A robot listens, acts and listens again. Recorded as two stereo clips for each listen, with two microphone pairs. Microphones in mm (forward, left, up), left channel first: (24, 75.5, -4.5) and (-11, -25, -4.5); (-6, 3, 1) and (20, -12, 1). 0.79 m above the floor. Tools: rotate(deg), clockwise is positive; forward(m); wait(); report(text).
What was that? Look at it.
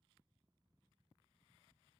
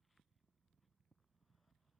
wait()
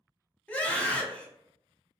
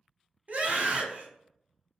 report("Found it: a scream, straight ahead.")